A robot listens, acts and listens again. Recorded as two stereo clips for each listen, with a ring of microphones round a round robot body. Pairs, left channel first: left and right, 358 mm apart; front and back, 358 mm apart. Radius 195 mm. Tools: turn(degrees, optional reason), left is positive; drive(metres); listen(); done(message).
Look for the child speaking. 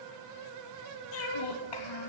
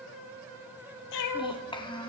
turn(degrees=75, reason="The child speaking: 75° left.")
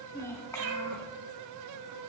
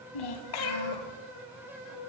done("Found it: a child speaking, straight ahead, 1 to 2 m away.")